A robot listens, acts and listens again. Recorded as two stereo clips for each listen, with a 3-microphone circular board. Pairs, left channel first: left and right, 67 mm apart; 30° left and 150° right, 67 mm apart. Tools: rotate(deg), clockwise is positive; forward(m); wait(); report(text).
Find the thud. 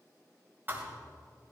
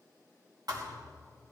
rotate(150)
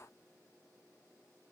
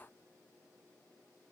report("Facing where the thud came from. I can't hear it now.")